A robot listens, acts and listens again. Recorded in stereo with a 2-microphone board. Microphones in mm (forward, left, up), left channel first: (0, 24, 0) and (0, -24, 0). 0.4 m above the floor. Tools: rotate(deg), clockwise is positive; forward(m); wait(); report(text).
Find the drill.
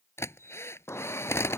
rotate(-65)
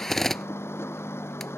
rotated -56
rotate(-10)
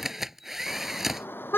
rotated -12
report("Found it: a drill, straight ahead.")